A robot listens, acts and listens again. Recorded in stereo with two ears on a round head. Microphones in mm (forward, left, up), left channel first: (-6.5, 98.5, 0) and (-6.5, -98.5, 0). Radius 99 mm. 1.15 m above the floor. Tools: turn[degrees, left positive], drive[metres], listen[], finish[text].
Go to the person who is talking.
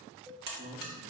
Thought: The man speaking: about 40° right or 140° right.
Action: turn[-40]
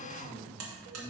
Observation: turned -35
Action: drive[1.0]
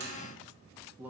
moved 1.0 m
Thought: The man speaking is now 10° right.
Action: turn[-10]
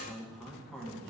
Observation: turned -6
Action: drive[1.0]
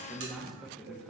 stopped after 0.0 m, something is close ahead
Action: finish[I am next to the man speaking.]